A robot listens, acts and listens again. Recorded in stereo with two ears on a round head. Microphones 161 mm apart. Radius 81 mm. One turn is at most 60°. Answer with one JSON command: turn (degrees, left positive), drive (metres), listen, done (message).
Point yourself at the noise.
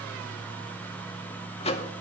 {"turn": 35}
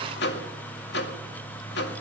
{"turn": 60}
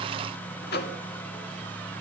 {"turn": 60}
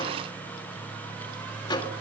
{"turn": 25}
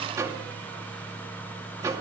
{"turn": -20}
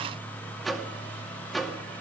{"done": "Found it: a microwave, straight ahead, 2 to 4 m away."}